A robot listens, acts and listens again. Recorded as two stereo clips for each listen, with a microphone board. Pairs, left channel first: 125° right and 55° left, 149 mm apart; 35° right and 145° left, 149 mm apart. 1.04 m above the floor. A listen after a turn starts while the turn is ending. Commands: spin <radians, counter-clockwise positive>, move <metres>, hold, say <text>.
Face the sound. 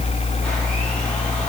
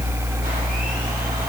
hold
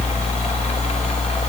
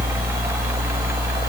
hold
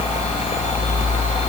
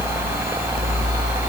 say I can't make out anything to turn to.